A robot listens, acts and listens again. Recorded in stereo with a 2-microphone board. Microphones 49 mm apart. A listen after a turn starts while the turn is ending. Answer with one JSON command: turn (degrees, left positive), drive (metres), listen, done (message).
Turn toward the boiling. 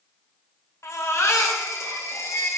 {"listen": true}
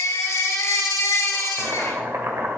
{"turn": -55}
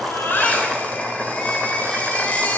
{"done": "Found it: boiling, straight ahead."}